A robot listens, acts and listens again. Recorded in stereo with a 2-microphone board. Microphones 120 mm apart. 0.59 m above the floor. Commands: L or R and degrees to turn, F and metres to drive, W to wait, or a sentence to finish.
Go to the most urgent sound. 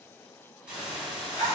W
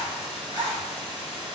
W
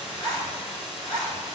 I can't make out anything urgent, only a hiss and a zipper.